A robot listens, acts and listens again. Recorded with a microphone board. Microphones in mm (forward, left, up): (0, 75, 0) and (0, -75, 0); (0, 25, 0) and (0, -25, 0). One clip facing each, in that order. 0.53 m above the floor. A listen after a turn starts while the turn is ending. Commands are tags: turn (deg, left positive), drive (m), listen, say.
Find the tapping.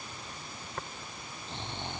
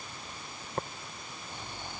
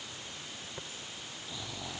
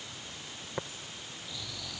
<turn deg="-35"/>
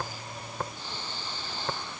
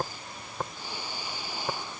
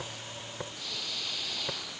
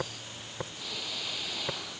<say>Facing the tapping.</say>